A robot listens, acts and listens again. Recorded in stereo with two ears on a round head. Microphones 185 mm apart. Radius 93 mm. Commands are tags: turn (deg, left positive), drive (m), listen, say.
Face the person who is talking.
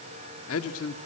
<turn deg="90"/>
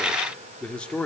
<say>Facing the man speaking, 2 to 4 m away.</say>